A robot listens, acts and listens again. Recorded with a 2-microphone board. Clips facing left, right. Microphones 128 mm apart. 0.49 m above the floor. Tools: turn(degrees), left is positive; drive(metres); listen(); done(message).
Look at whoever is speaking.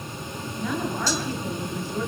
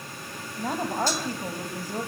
turn(degrees=-40)
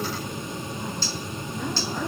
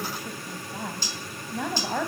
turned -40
turn(degrees=-100)
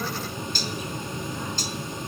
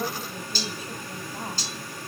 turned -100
listen()
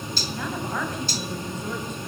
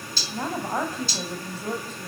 turn(degrees=-35)
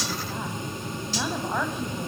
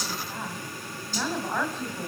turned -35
turn(degrees=10)
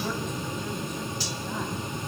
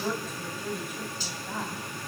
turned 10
done("Facing the woman speaking, 2 to 4 m away.")